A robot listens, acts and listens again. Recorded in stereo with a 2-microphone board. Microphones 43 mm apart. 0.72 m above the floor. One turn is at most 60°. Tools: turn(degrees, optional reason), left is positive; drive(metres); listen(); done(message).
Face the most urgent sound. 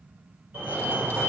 turn(degrees=-30, reason="The fire alarm: about 30° right or 150° right.")
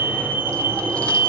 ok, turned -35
turn(degrees=-60, reason="So it is at 115° right.")
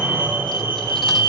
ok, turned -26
turn(degrees=-60, reason="The fire alarm is now 90° right.")
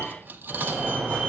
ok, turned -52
turn(degrees=-35, reason="The fire alarm is now 35° right.")
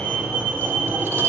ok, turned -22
turn(degrees=-15, reason="The fire alarm is now 15° right.")
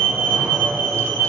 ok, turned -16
done("Facing the fire alarm.")